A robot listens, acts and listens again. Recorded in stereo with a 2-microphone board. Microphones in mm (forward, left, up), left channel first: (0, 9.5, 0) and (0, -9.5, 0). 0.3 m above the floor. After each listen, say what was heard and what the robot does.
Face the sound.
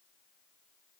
Keep listening.
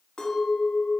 The clink: about 60° left or 120° left. Turn 60° left.
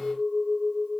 So it is at 10° left. Turn 10° left.
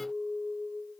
Facing the clink, 1 to 2 m away.